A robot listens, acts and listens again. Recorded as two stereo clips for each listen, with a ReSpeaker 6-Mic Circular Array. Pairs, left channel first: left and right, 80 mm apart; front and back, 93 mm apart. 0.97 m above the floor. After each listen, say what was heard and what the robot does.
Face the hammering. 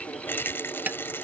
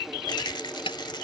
The hammering: 20° right. Turn 20° right.
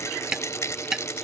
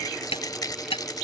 The hammering is now 10° right. Turn 10° right.
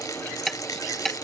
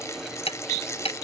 Found it: hammering, straight ahead.